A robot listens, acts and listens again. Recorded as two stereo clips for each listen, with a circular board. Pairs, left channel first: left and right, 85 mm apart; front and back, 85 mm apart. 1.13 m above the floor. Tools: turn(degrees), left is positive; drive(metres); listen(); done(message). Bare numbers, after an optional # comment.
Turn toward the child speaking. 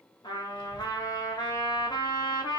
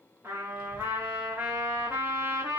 # The child speaking: 165° left.
turn(165)
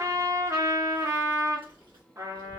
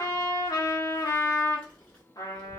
# The child speaking is now 80° right.
turn(-80)
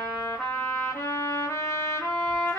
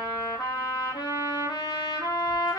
# The child speaking is now 10° right.
turn(-10)
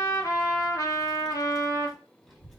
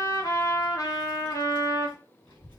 done("Facing the child speaking, 2 to 4 m away.")